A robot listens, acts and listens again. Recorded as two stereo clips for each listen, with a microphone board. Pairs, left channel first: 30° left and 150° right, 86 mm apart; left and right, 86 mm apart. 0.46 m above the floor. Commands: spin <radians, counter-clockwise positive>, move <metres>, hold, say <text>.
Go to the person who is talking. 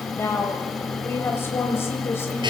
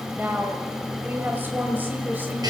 spin -0.44
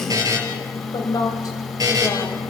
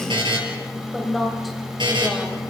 move 1.0
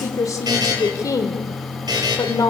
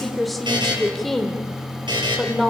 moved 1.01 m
move 1.0
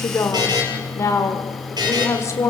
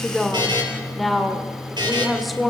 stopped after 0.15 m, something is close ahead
say Arrived at the woman speaking, straight ahead.